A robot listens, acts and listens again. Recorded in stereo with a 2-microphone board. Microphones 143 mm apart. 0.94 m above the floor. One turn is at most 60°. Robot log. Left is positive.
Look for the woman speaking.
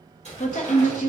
note: The woman speaking: about 55° left or 125° left.
cmd yaw +55
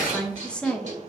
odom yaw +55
end: Facing the woman speaking.